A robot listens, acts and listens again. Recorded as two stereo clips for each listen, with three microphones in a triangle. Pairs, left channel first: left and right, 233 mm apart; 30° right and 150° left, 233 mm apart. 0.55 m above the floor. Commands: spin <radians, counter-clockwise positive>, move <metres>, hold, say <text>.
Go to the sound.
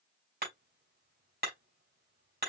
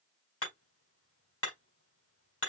spin -0.79
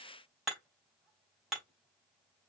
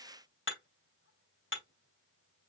move 1.0
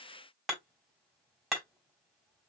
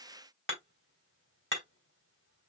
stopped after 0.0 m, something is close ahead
say Blocked. The hammering is further on, straight ahead.